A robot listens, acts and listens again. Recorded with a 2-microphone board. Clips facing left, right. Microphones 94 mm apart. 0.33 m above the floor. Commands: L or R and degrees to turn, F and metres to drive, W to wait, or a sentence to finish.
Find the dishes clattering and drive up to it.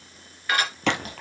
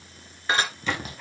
R25
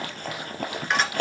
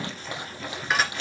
F1.0
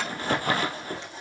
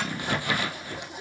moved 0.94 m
W
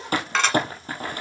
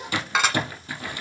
R10
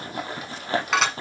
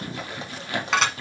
F1.0
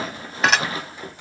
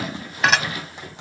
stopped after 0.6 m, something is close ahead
Arrived at the dishes clattering, straight ahead.